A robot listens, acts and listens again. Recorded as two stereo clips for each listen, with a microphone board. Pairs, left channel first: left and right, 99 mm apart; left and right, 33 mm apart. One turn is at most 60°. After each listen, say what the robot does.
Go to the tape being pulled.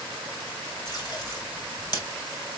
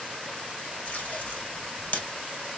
Turn 40° left.
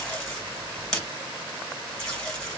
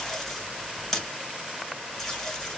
Drive 1.0 m forward.
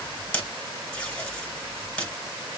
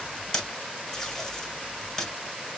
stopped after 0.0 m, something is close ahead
Turn 10° left.
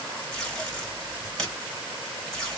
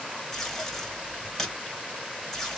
Blocked. The tape being pulled is further on, straight ahead.